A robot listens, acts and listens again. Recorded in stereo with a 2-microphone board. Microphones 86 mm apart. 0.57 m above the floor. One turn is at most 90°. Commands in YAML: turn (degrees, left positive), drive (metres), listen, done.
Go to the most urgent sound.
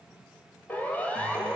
turn: 20
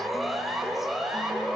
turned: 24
drive: 1.0
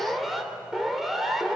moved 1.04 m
drive: 1.0
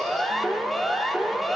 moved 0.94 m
drive: 1.0
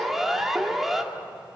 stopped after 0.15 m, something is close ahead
done: "Arrived at the siren, straight ahead."